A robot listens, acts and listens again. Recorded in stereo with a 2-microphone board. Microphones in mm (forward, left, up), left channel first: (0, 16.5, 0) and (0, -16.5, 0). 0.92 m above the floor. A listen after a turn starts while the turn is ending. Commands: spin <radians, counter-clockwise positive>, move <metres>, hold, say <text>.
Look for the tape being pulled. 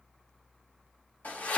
hold
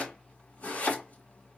hold
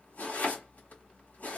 say I can't make out tape being pulled to turn to.